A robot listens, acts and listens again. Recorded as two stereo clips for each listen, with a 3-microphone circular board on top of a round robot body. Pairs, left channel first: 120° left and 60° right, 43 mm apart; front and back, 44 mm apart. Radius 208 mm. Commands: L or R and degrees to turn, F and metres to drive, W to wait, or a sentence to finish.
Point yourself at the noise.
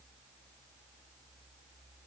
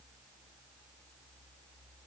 W
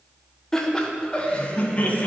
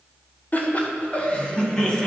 L70
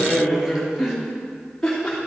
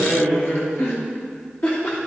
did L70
L35
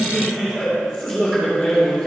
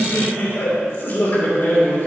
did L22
L15
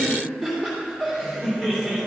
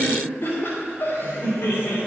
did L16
Found it: laughter, straight ahead, 2 to 4 m away.